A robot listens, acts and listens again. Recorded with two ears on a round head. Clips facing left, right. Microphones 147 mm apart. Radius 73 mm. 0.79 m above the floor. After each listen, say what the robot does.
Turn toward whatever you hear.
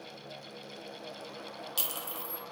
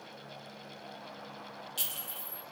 Turn 45° left.
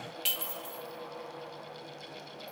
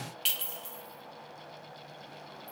Found it: a clink, straight ahead, under 1 m away.